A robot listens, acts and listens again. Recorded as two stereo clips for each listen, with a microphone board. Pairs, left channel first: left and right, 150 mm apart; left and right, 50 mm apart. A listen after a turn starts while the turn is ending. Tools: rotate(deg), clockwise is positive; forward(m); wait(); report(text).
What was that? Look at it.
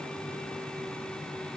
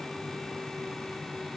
wait()
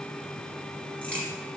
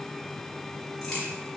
rotate(-30)
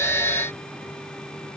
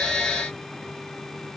wait()
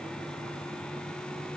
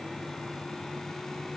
report("I heard a crack, but can't make it out now. It was about 20° right or 140° left.")